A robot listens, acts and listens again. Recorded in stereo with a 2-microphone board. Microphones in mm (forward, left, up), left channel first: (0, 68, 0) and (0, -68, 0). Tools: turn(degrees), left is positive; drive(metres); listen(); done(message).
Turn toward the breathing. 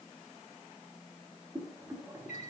listen()
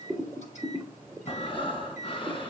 turn(degrees=40)
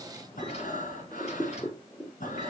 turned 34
turn(degrees=105)
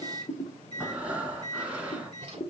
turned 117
turn(degrees=-10)
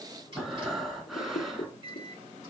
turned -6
done("Facing the breathing.")